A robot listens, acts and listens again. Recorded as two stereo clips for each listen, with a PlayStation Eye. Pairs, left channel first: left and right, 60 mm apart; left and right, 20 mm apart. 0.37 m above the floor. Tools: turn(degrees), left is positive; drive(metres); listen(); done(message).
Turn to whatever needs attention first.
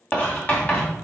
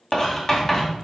listen()
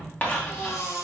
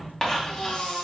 turn(degrees=60)
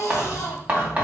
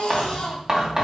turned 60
turn(degrees=60)
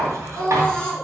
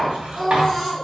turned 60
turn(degrees=15)
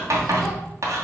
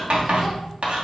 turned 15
listen()
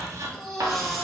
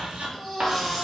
done("Facing the baby crying, 1 to 2 m away.")